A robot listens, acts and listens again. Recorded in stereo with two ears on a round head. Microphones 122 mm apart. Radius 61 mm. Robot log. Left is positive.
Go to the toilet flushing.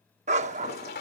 cmd yaw +90
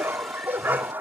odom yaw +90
cmd idle
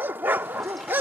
cmd idle
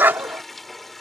cmd fwd 1.0
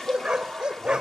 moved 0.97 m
cmd idle
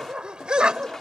cmd fwd 1.0
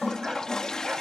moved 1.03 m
cmd fwd 1.0
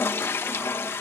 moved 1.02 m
note: The toilet flushing is now 20° left.
cmd yaw +20
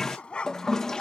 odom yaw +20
cmd fwd 1.0
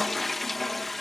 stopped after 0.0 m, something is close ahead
end: Arrived at the toilet flushing, straight ahead.